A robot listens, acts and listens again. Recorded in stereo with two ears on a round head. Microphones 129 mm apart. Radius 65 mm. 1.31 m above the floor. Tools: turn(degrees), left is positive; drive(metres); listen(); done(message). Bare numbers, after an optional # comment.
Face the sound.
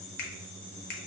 # The finger snap: about 70° left or 110° left.
turn(70)
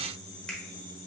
# So it is at 10° left.
turn(10)
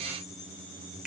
done("Found it: a finger snap, straight ahead, 1 to 2 m away.")